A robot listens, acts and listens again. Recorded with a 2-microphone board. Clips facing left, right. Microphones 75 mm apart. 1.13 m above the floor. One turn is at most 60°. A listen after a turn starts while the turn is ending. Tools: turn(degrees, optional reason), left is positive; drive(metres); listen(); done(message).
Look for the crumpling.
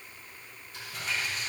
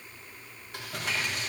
turn(degrees=-60, reason="The crumpling: about 65° right or 115° right.")
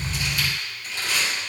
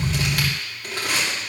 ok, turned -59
turn(degrees=-55, reason="So it is at 55° right.")
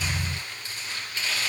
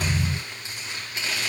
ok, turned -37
turn(degrees=-15, reason="The crumpling is now 15° right.")
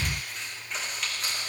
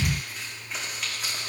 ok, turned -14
done("Facing the crumpling, 2 to 4 m away.")